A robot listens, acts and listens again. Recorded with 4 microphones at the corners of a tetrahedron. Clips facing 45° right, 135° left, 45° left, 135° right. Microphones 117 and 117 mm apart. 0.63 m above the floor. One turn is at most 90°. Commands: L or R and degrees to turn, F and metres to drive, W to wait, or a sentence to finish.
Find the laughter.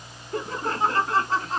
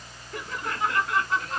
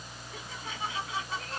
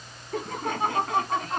R90
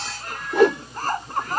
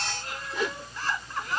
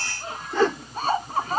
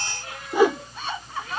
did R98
Found it: laughter, straight ahead.